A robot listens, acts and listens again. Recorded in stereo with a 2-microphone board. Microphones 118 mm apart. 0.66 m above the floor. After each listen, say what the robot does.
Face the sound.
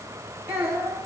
Turn 25° right.
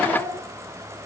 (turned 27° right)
Turn 130° right.
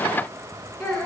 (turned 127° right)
Facing the child speaking, over 4 m away.